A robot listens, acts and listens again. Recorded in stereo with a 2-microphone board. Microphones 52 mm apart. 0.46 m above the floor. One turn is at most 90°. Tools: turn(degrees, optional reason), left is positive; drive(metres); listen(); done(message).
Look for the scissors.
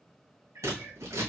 turn(degrees=-70, reason="The scissors: about 70° right or 110° right.")
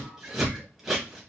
turn(degrees=-10, reason="So it is at 10° right.")
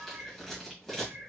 done("Facing the scissors.")